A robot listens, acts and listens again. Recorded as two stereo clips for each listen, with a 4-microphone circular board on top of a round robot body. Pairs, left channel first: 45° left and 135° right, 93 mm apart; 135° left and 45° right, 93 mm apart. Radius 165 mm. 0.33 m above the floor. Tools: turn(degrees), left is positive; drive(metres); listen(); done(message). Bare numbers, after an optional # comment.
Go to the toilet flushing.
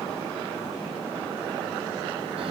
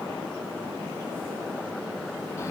listen()
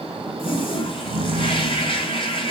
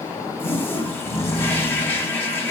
# The toilet flushing: 65° left.
turn(65)
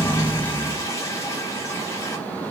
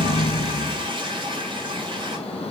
# The toilet flushing is now 15° right.
turn(-15)
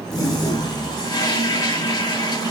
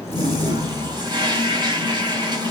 drive(1.0)
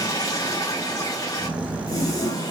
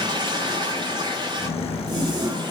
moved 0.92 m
drive(1.0)
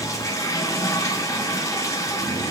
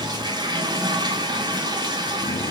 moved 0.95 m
# The toilet flushing is now 10° right.
turn(-10)
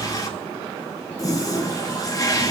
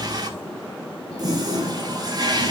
drive(1.0)
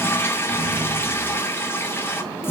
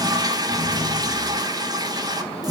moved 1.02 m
# The toilet flushing is now 15° right.
turn(-15)
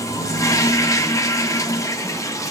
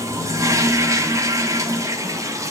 drive(1.0)
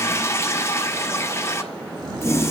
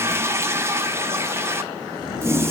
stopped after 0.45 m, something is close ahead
done("Arrived at the toilet flushing, straight ahead.")